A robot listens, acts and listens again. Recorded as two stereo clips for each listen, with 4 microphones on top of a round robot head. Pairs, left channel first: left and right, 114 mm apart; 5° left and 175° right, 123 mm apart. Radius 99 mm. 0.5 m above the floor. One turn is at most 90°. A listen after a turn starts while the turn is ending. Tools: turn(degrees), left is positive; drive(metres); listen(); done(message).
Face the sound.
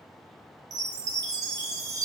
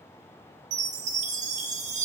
turn(degrees=-90)
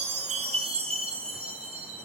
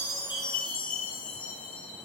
turn(degrees=-70)
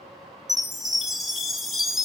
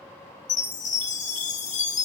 done("Found it: a chime, straight ahead.")